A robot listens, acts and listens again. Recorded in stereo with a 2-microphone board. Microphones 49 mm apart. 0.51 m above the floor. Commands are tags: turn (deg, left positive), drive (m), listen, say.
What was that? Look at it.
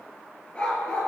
<turn deg="20"/>
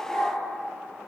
<turn deg="30"/>
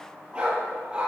<turn deg="-20"/>
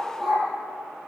<say>Facing the dog barking.</say>